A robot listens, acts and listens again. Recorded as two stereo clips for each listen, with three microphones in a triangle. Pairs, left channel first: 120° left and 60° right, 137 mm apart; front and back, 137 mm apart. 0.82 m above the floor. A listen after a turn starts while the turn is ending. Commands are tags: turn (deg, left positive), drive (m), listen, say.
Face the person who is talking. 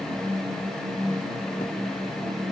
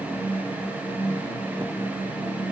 <listen/>
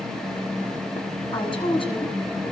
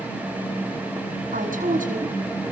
<turn deg="170"/>
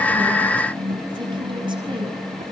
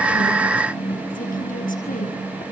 <listen/>
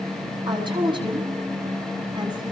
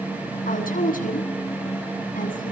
<say>Facing the woman speaking, over 4 m away.</say>